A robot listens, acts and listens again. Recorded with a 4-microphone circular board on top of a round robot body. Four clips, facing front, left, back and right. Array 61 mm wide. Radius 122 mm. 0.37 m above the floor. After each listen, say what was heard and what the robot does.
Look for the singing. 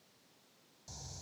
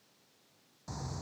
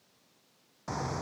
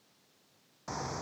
Keep listening.
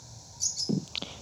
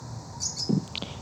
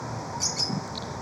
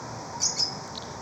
The singing: 60° left. Turn 60° left.
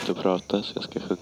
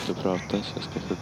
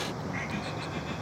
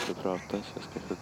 The singing is now 10° left. Turn 10° left.
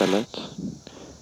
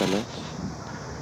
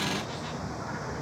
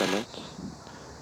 Facing the singing.